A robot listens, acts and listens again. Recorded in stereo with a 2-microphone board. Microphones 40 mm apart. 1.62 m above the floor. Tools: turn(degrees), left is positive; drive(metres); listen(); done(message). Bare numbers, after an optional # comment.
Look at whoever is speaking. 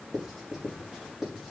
listen()
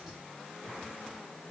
listen()
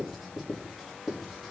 done("I can't make out anyone speaking, only writing.")